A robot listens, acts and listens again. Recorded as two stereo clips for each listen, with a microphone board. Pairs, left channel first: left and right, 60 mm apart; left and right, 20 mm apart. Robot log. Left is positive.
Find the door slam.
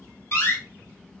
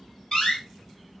note: The door slam: about 50° left or 130° left.
cmd yaw +50
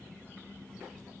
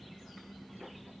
cmd idle
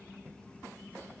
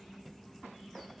end: I heard a door slam, but can't make it out now. It was about straight ahead or 80° left.